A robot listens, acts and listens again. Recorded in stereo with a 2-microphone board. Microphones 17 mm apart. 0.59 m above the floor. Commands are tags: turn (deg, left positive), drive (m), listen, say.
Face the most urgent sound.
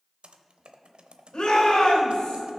<turn deg="55"/>
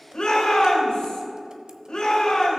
<turn deg="70"/>
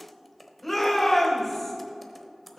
<turn deg="15"/>
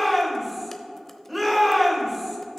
<say>Found it: a shout, straight ahead.</say>